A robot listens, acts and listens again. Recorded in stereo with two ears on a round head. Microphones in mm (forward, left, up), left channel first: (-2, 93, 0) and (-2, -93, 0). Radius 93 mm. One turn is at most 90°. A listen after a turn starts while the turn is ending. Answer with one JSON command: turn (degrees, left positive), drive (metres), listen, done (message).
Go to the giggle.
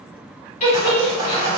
{"turn": 35}
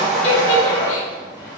{"listen": true}
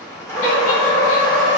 {"listen": true}
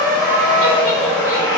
{"done": "I heard a giggle, but can't make it out now. It was about straight ahead or 110° left. I did not reach it."}